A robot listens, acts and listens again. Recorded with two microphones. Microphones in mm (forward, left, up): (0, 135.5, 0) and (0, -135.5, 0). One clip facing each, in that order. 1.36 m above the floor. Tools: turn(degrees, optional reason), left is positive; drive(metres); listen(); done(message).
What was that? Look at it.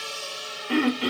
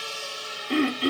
turn(degrees=70, reason="The throat clearing: about 70° left or 110° left.")
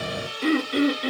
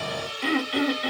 turn(degrees=40, reason="So it is at 40° left.")
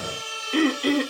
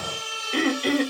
done("Found it: throat clearing, straight ahead.")